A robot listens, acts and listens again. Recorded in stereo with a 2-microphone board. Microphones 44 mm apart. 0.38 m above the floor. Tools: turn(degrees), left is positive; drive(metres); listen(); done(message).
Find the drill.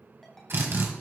turn(degrees=-65)
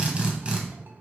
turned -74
turn(degrees=-30)
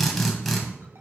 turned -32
done("Facing the drill, 1 to 2 m away.")